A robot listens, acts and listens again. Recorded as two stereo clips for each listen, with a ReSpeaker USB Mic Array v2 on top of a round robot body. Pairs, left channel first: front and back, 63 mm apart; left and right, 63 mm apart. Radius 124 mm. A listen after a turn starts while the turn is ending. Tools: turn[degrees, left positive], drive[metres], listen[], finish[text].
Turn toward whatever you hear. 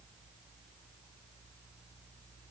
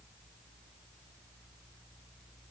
Action: listen[]
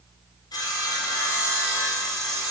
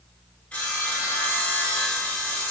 Thought: The sawing: 15° left.
Action: turn[15]
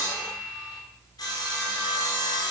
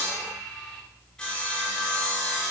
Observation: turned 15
Thought: The sawing is now 10° left.
Action: turn[10]
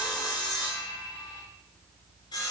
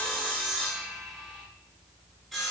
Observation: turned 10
Action: finish[Found it: sawing, straight ahead.]